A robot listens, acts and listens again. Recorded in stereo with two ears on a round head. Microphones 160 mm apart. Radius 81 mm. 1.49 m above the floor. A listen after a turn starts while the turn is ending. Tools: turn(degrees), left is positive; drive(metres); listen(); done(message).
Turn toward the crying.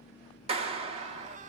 turn(degrees=-40)
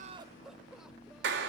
done("Facing the crying, under 1 m away.")